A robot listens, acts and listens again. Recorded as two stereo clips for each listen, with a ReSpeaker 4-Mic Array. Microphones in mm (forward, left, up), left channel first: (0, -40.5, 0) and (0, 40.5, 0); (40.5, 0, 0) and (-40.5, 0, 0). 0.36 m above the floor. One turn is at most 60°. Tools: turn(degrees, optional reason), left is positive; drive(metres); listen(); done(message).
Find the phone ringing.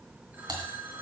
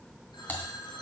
turn(degrees=25, reason="The phone ringing: 25° left.")
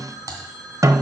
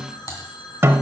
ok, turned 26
done("Facing the phone ringing.")